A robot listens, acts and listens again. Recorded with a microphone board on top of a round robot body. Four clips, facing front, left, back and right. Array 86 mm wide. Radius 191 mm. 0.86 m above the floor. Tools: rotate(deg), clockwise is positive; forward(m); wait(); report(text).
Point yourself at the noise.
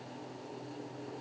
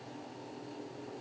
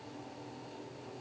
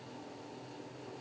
wait()
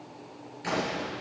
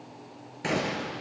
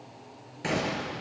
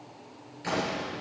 rotate(-120)
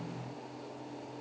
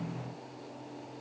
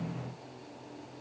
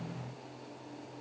report("Facing where the gunshot came from. I can't hear it now.")